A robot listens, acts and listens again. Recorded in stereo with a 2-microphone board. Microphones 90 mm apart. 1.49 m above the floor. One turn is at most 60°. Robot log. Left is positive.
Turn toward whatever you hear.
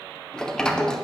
cmd yaw +30
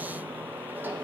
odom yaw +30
note: So it is at 20° right.
cmd yaw -20
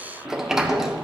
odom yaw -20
end: Facing the sliding door.